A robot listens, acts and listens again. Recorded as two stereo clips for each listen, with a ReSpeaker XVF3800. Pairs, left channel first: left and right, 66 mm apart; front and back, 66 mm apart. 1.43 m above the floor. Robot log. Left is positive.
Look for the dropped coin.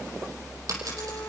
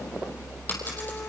note: The dropped coin: 60° right.
cmd yaw -60
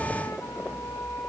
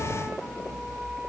end: Facing where the dropped coin came from. I can't hear it now.